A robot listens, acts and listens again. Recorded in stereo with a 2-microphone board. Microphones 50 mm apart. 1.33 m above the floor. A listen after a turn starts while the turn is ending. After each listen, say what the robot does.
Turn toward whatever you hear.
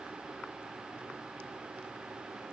Keep listening.
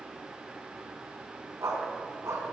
Turn 75° right.
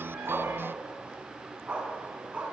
Turn 25° right.
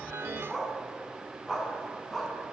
Turn 10° left.
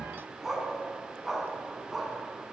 Found it: a dog barking, straight ahead.